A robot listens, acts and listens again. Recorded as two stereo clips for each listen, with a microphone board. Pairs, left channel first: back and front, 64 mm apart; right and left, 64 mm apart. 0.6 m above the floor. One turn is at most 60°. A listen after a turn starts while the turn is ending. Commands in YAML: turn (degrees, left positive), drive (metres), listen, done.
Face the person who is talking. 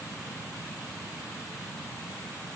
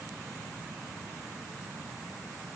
listen: true
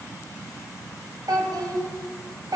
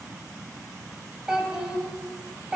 turn: 10
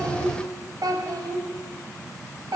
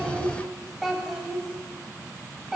done: "Found it: a child speaking, straight ahead, 1 to 2 m away."